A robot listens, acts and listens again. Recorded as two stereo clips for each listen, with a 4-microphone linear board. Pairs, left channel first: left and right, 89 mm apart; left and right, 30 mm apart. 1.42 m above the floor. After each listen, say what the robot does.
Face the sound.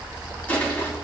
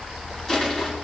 Turn 15° left.
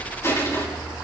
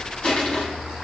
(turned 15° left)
Turn 150° left.
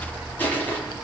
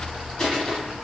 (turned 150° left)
Turn 20° left.
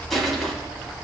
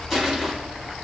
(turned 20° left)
Found it: crushing, straight ahead, over 4 m away.